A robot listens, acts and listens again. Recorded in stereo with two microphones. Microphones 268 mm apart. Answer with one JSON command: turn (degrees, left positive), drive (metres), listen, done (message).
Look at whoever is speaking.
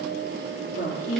{"turn": 50}
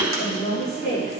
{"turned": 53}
{"turn": 75}
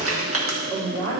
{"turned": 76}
{"turn": 15}
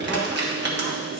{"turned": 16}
{"listen": true}
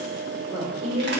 {"done": "Found it: a woman speaking, straight ahead, over 4 m away."}